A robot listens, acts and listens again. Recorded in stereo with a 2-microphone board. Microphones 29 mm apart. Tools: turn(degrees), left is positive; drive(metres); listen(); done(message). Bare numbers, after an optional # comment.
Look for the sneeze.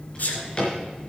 # The sneeze: about 65° left or 115° left.
turn(65)
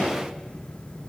listen()
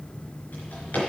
done("I heard a sneeze, but can't make it out now. It was about straight ahead or 50° left.")